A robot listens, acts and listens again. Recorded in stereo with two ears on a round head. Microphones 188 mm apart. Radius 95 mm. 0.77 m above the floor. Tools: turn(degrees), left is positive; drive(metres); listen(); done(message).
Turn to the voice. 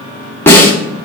listen()
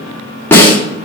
listen()
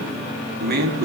turn(degrees=-50)
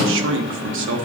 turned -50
turn(degrees=-75)
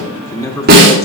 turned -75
turn(degrees=20)
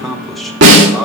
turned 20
done("Found it: a man speaking, straight ahead, 1 to 2 m away.")